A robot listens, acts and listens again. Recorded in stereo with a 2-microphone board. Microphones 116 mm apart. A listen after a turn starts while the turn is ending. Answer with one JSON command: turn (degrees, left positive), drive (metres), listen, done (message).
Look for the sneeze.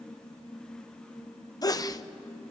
{"turn": 30}
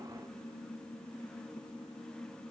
{"listen": true}
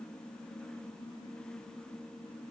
{"done": "I heard a sneeze, but can't make it out now. It was about straight ahead or 120° left."}